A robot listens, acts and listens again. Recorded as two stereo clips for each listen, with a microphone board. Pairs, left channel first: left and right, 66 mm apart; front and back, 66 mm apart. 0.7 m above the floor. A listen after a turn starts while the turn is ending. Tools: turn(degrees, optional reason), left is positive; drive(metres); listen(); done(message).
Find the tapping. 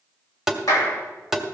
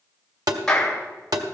turn(degrees=-175, reason="The tapping: 175° right.")
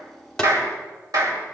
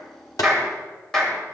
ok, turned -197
turn(degrees=25, reason="Nothing new. It was at 25° left.")
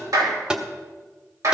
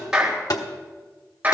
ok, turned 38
turn(degrees=-15, reason="The tapping is now 15° right.")
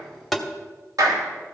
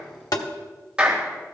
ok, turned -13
done("Found it: tapping, straight ahead, 1 to 2 m away.")